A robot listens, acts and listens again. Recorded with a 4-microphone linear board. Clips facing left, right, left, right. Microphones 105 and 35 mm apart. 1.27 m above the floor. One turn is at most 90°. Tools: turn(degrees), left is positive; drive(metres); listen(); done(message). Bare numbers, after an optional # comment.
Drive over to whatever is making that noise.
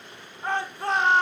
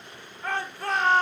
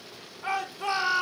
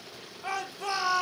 # The shout: about 25° left or 155° left.
turn(25)
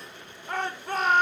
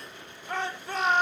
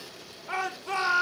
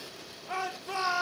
# So it is at 130° left.
turn(90)
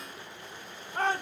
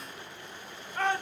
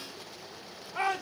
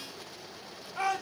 # The shout is now 35° left.
turn(35)
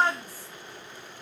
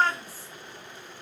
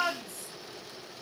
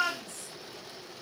# The shout is now 15° left.
turn(15)
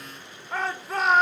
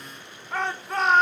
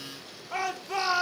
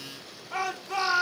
drive(1.0)
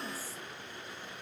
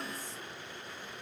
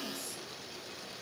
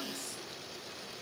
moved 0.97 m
listen()
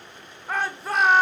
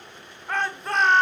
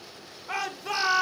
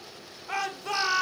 drive(1.0)
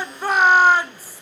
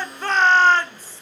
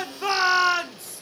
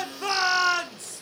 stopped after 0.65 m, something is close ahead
# The shout is now 10° left.
turn(10)
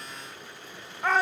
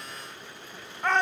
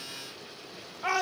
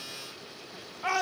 done("I am next to the shout.")